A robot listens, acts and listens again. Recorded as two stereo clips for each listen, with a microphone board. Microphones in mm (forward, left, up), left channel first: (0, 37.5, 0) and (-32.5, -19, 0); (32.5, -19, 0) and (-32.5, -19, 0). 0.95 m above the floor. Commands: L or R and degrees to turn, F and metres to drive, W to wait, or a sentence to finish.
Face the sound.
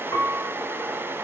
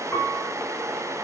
L60
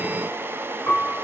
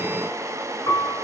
Found it: a piano, straight ahead.